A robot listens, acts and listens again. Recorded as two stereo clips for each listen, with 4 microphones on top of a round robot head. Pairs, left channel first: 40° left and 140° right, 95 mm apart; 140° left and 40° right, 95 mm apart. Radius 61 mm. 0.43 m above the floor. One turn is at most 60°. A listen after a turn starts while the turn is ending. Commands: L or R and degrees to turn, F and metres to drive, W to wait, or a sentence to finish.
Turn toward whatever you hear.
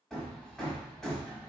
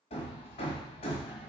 L60
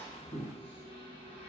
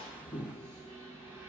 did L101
L25
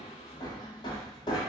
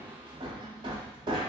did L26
Facing the hammering, 1 to 2 m away.